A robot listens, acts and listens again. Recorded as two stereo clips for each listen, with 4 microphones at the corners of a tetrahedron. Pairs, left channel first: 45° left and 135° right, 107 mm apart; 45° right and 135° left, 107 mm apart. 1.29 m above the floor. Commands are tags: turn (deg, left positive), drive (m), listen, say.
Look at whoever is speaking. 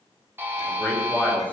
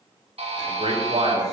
<turn deg="120"/>
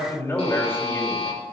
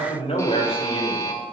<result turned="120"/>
<turn deg="-20"/>
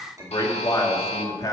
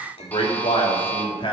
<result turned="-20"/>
<turn deg="-10"/>
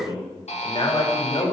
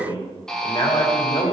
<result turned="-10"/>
<say>Found it: a man speaking, straight ahead, 2 to 4 m away.</say>